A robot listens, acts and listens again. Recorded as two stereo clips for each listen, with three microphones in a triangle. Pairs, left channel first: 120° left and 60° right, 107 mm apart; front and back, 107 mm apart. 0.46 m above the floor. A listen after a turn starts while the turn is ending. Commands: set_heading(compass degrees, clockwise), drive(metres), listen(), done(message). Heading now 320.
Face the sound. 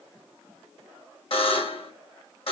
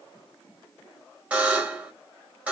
set_heading(215)
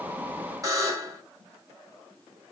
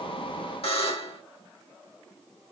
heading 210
done("Found it: a buzzer, straight ahead, 1 to 2 m away.")